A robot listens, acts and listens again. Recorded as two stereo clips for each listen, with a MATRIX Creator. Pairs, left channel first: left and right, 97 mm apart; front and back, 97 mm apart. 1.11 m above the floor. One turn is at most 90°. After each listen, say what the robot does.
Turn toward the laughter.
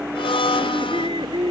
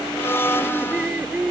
Turn 90° right.
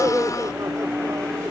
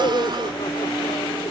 Turn 30° right.
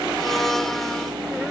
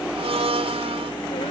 Keep listening.
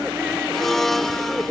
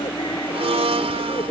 Turn 10° right.
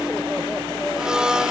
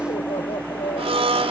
Keep listening.
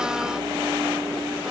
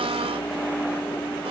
Keep listening.
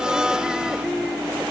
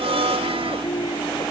Facing where the laughter came from. I can't hear it now.